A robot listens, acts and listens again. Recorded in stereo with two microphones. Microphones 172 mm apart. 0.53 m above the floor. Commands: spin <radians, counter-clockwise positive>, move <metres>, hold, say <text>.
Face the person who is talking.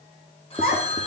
spin 1.13
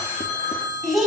say Facing the child speaking, 2 to 4 m away.